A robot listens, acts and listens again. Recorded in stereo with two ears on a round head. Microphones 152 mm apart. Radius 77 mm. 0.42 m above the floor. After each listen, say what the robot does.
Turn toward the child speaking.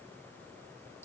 Keep listening.
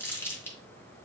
Keep listening.
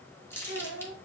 Turn 70° left.
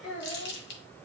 Turn 35° left.
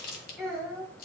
Facing the child speaking, over 4 m away.